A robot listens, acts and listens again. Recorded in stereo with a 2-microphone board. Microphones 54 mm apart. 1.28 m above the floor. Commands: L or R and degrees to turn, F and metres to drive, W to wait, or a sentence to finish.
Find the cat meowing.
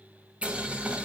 W
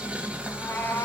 L45
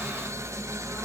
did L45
W
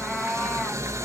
Found it: a cat meowing, straight ahead.